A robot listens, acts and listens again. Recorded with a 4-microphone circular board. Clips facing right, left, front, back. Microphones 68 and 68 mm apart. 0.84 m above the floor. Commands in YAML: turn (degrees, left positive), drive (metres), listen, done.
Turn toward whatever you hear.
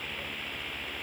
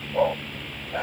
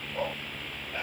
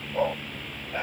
turn: 110
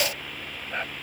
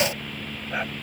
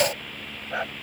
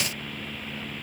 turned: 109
turn: 10
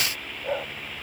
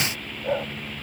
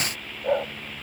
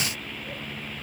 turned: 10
done: "Found it: a dog barking, straight ahead."